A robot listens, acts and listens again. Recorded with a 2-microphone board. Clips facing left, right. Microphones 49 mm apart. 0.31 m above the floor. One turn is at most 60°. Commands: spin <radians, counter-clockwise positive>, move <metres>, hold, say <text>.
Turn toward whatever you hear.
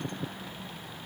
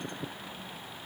hold
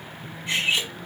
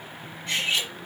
spin 0.52
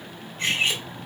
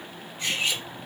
spin 1.05
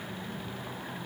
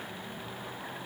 spin 1.05
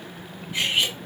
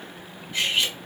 spin 0.26
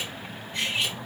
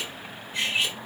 say Found it: cutlery clinking, straight ahead, 1 to 2 m away.